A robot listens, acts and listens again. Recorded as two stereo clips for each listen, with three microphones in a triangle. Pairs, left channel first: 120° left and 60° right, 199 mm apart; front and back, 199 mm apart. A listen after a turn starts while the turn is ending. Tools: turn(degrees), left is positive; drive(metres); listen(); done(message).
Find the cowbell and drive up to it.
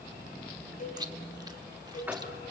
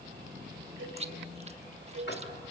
turn(degrees=165)
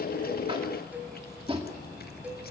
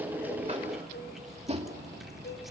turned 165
turn(degrees=25)
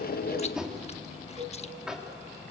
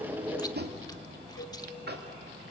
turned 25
drive(metres=1.0)
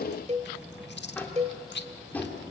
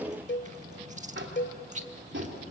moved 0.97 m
drive(metres=1.0)
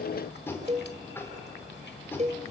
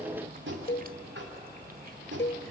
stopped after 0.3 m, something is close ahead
turn(degrees=-10)
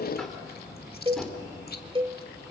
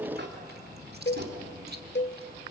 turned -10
done("I am next to the cowbell.")